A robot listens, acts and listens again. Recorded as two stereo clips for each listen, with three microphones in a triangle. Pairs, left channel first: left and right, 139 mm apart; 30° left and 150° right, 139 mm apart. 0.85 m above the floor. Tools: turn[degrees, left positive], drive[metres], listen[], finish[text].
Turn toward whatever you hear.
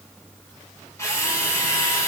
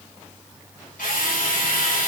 Thought: The drill: 20° left.
Action: turn[20]
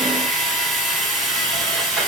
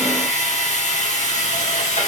Action: finish[Facing the drill.]